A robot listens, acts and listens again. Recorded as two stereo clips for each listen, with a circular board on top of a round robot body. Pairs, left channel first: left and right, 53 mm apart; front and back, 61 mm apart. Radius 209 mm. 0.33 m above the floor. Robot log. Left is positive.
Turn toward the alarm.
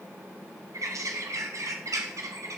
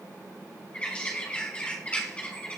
cmd idle
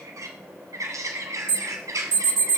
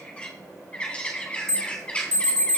note: The alarm: 170° left.
cmd yaw +170
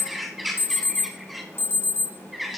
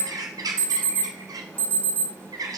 note: The alarm is now 60° left.
cmd yaw +60
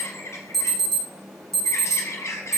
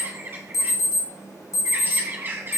end: Found it: an alarm, straight ahead.